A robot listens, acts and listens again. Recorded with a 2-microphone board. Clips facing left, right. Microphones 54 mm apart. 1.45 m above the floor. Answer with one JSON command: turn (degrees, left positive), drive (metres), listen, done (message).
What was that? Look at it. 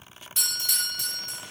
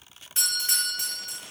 {"turn": -40}
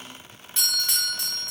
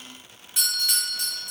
{"done": "Found it: a doorbell, straight ahead, 1 to 2 m away."}